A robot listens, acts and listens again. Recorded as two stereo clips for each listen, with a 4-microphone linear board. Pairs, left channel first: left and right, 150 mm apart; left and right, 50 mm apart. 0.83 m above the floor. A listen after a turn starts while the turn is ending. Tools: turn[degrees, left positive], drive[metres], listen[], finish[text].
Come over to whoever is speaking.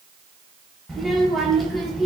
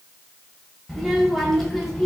Action: turn[30]
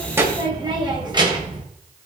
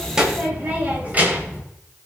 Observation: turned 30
Thought: So it is at 30° right.
Action: turn[-30]
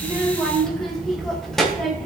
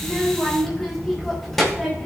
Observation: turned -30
Action: drive[1.0]
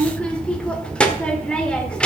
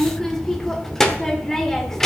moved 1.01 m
Action: drive[1.0]
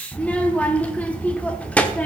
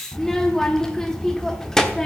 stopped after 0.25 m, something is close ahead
Thought: The child speaking is now 10° left.
Action: turn[10]
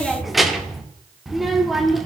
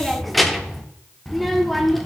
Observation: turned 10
Action: finish[I am next to the child speaking.]